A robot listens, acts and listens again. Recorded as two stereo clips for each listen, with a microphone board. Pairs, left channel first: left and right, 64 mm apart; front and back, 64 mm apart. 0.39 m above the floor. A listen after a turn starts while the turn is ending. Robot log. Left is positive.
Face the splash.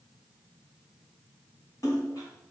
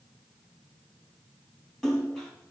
note: The splash: 85° left.
cmd yaw +85
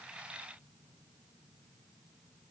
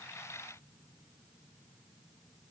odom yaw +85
end: Facing where the splash came from. I can't hear it now.